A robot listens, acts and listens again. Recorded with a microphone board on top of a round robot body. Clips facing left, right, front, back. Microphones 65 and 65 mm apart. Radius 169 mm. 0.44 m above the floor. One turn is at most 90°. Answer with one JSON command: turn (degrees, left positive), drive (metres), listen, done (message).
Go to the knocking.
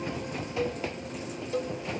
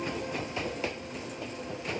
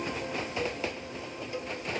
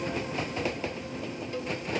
{"listen": true}
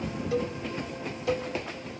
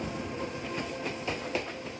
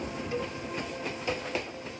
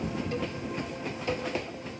{"listen": true}
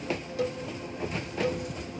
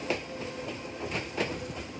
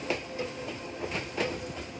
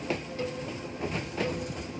{"done": "I can't make out knocking to turn to."}